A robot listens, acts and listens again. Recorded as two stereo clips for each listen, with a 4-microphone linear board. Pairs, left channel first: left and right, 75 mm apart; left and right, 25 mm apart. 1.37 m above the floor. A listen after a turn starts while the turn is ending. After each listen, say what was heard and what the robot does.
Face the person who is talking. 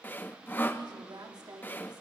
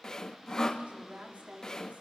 The woman speaking: about 70° right or 110° right. Turn 70° right.
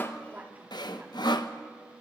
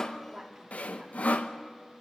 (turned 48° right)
Keep listening.
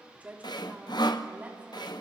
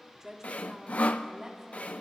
So it is at 20° right. Turn 20° right.
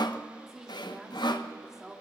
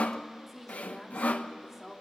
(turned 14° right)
Facing the woman speaking, 2 to 4 m away.